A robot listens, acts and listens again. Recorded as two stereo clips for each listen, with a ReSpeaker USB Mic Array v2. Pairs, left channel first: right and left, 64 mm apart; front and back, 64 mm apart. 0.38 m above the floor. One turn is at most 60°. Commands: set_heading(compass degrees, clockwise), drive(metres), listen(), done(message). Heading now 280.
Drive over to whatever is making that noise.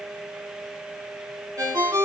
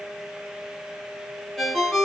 set_heading(220)
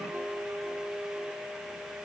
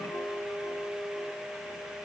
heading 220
set_heading(195)
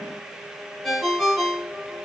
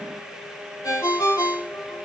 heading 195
drive(1.0)
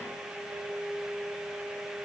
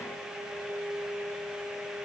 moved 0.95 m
listen()
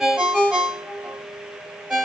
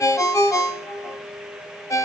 set_heading(185)
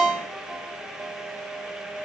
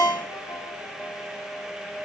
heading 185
drive(1.0)
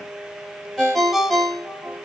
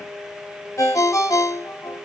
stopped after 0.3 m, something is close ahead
done("I am next to the ringtone.")